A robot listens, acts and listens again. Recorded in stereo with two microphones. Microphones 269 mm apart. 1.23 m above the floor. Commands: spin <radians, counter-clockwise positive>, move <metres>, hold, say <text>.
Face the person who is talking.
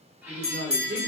spin -0.79
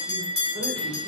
hold
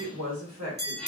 spin -1.48
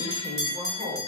say Found it: a woman speaking, straight ahead, 1 to 2 m away.